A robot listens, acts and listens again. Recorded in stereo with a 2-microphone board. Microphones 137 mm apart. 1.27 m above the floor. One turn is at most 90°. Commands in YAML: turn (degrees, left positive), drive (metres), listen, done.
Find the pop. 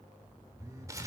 listen: true
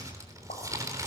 turn: 90
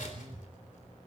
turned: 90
done: "I heard a pop from this way, but can't make it out now."